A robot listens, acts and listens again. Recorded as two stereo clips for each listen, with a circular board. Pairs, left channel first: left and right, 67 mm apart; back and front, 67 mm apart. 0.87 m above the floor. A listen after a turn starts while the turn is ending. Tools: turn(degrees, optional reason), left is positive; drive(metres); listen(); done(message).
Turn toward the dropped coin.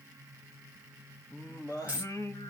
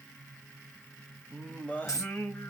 turn(degrees=-155, reason="The dropped coin: 155° right.")
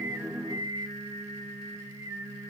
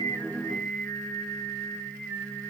done("Facing where the dropped coin came from. I can't hear it now.")